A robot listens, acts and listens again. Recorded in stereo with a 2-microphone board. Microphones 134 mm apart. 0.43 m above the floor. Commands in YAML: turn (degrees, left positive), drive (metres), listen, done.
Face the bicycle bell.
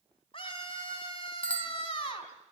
turn: 30
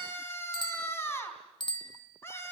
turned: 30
turn: 140
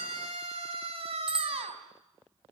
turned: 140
done: "Found it: a bicycle bell, straight ahead."